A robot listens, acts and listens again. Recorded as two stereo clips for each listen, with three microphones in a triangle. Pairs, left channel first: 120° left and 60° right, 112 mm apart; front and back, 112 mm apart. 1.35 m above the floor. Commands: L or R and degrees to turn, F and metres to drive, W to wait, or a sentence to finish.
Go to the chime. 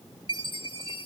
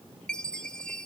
L80
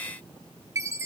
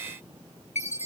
F1.0
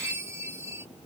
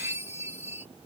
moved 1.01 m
F1.0
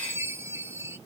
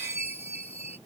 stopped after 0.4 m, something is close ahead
Arrived at the chime, straight ahead.